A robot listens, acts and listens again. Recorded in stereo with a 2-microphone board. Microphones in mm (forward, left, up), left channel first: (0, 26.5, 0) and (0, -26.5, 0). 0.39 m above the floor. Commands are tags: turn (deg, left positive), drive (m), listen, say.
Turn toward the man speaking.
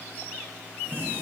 <listen/>
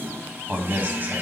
<turn deg="-35"/>
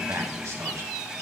<turn deg="-110"/>
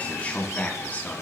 <turn deg="35"/>
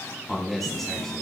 <say>Facing the man speaking, 2 to 4 m away.</say>